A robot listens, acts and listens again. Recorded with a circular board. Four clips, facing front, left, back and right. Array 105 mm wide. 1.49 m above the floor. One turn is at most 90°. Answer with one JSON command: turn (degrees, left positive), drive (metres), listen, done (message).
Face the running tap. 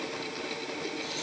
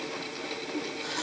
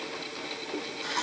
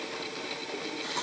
{"turn": -90}
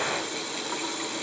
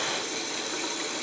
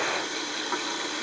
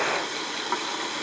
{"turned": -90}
{"turn": -90}
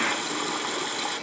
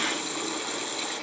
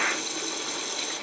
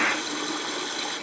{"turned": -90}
{"done": "Found it: a running tap, straight ahead."}